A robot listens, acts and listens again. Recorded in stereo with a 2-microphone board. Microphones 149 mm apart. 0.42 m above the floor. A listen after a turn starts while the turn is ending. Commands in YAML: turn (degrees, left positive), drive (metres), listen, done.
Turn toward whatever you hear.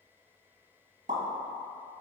turn: -65
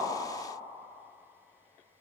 listen: true
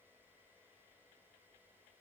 done: "I heard a pop, but can't make it out now. It was about straight ahead or 50° right."